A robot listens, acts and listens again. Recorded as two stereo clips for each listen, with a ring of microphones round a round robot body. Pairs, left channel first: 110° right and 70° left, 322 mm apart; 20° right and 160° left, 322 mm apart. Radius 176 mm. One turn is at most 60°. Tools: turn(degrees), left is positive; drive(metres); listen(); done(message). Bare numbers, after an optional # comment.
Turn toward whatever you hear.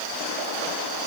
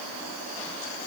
listen()
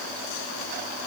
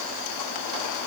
listen()
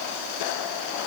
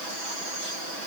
done("I can't make out anything to turn to.")